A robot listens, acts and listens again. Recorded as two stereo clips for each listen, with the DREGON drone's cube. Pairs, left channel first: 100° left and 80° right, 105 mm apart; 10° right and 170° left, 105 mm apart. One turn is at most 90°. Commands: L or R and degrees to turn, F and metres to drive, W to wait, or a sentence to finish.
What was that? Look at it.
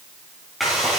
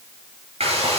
R90
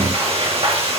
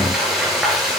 R90
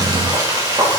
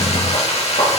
R25
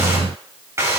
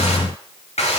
R15
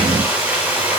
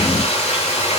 Found it: frying, straight ahead, over 4 m away.